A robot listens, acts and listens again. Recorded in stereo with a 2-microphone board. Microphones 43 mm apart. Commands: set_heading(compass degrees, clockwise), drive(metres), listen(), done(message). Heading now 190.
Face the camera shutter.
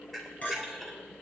set_heading(160)
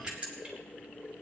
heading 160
set_heading(185)
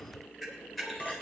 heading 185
done("Facing the camera shutter, 2 to 4 m away.")